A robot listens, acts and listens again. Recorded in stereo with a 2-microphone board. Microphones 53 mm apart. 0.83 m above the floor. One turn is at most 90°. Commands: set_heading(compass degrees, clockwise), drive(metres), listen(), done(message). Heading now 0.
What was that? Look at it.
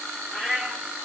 set_heading(30)
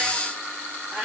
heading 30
set_heading(120)
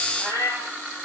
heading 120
set_heading(200)
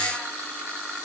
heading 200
listen()
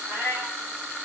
set_heading(245)
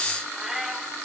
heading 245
done("Facing the cat meowing, over 4 m away.")